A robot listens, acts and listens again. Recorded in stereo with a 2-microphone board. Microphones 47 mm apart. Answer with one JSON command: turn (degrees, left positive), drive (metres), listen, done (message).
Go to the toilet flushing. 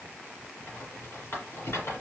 {"listen": true}
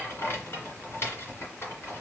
{"listen": true}
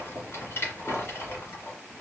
{"done": "I can't make out a toilet flushing, only a rattle."}